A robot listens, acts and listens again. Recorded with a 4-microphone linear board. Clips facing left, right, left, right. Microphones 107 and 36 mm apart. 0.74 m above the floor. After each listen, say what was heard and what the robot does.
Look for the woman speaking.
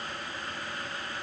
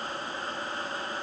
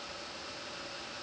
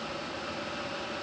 Keep listening.
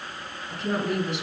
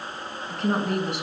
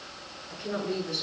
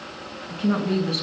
Turn 90° right.
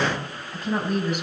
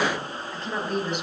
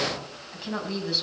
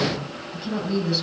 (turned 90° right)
Found it: a woman speaking, straight ahead, over 4 m away.